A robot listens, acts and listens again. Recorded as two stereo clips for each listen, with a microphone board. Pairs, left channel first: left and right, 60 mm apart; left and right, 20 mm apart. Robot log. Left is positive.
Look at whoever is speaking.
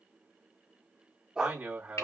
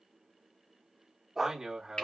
note: The man speaking: about 35° right or 145° right.
cmd yaw -35
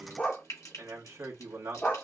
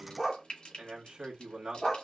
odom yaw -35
note: So it is at 100° right.
cmd yaw -100
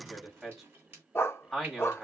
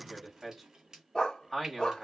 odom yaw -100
end: Facing the man speaking, 1 to 2 m away.